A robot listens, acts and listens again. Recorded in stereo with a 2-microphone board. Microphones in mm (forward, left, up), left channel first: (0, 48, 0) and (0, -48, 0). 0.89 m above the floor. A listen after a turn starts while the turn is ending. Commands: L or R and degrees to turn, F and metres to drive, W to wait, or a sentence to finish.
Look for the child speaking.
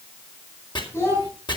L25
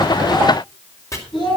L130
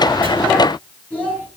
L10
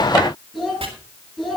Facing the child speaking.